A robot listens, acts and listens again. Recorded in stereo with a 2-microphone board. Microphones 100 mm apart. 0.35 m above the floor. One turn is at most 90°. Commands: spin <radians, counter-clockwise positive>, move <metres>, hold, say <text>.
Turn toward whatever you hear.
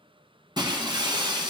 spin -0.79
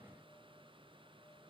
hold
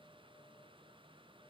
say I heard breaking glass, but can't make it out now. It was about straight ahead or 90° right.